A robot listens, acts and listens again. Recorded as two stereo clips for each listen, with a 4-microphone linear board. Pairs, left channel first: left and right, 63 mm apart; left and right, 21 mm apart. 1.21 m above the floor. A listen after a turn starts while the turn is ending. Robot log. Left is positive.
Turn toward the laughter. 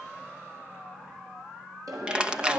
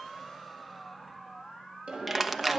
note: The laughter: about 75° right or 105° right.
cmd yaw -75
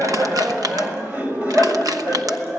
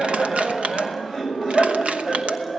note: So it is at 25° right.
cmd yaw -25
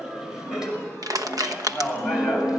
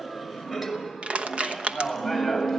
note: The laughter is now 10° right.
cmd yaw -10
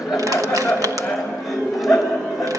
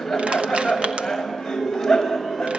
end: Found it: laughter, straight ahead, over 4 m away.